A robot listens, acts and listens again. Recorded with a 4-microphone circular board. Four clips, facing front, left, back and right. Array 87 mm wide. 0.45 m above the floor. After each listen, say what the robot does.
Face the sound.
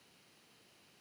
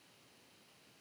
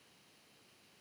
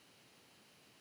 Keep listening.
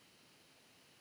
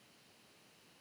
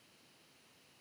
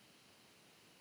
Keep listening.
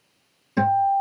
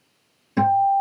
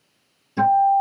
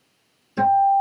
Turn 50° left.
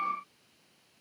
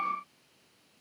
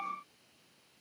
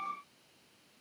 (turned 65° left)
Turn 15° right.
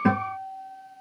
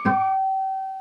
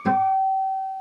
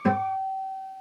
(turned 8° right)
Facing the guitar.